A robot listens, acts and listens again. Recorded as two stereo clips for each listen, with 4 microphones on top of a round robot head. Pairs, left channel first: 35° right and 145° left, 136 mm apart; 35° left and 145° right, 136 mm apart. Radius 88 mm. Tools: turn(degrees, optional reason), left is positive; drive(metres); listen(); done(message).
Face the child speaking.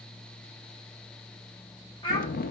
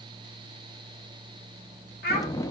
turn(degrees=25, reason="The child speaking: 25° left.")
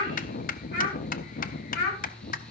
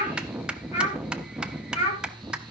turn(degrees=-15, reason="The child speaking is now 15° right.")
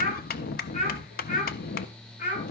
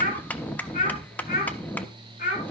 done("Facing the child speaking.")